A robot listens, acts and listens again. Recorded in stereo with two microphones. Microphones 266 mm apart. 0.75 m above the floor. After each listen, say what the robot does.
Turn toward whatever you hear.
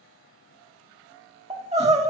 Turn 25° right.
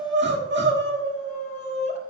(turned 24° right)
Turn 130° right.
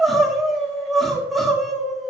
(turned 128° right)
Facing the crying, 1 to 2 m away.